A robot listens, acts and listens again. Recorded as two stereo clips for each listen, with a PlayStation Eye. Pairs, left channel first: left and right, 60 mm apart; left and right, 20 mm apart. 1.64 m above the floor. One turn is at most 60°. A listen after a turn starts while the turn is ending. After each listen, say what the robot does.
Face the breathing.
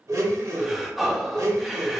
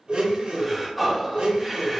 Turn 30° right.
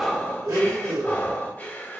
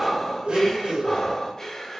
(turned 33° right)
Turn 30° left.
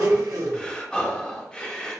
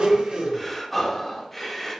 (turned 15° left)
Turn 15° left.
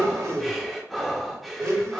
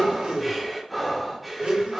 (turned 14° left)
Facing the breathing.